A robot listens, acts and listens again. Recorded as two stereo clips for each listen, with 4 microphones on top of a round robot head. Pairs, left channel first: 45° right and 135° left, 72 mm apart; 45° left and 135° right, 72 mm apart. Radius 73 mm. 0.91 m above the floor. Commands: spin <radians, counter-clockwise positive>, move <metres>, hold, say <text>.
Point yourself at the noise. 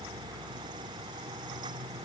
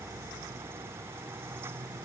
hold
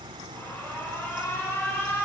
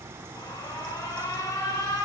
spin 0.26
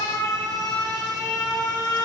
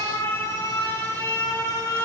say Found it: an alarm, straight ahead.